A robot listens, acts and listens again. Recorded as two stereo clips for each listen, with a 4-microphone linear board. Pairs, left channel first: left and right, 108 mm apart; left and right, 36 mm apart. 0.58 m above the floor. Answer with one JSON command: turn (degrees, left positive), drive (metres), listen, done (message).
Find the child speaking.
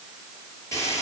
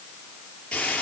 {"listen": true}
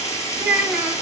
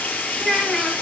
{"turn": -30}
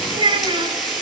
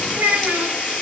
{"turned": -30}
{"turn": -135}
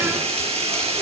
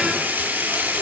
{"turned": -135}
{"listen": true}
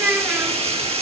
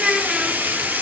{"turn": -15}
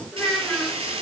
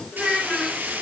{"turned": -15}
{"turn": 10}
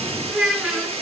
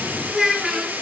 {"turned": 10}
{"done": "Facing the child speaking."}